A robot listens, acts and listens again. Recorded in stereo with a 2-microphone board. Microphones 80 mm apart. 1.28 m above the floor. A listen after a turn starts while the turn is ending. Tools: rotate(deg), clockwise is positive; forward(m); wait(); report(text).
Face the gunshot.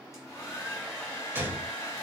rotate(25)
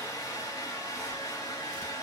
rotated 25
wait()
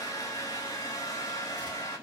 report("I heard a gunshot, but can't make it out now. It was about straight ahead or 130° right.")